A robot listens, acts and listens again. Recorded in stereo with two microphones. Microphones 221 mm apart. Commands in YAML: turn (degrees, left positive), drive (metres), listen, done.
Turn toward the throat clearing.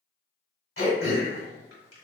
turn: 65
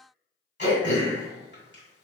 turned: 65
turn: 50
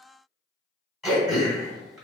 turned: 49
done: "Facing the throat clearing, 1 to 2 m away."